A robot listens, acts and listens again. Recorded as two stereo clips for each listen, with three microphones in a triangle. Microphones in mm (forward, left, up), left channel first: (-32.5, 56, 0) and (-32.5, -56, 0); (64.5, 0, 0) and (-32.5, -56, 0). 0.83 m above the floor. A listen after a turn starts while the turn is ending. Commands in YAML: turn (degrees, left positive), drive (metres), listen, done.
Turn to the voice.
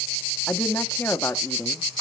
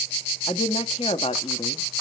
turn: 25
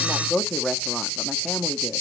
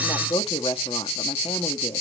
done: "Found it: a woman speaking, straight ahead, 1 to 2 m away."